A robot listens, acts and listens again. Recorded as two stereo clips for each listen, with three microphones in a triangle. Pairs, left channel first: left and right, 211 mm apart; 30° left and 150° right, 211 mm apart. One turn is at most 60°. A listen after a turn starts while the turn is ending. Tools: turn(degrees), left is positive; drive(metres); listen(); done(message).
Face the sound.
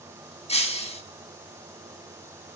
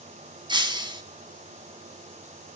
turn(degrees=60)
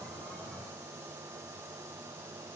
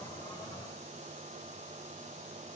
turn(degrees=60)
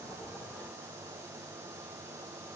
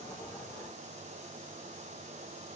turn(degrees=25)
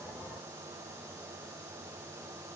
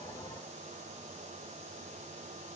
done("Facing where the breaking glass came from. I can't hear it now.")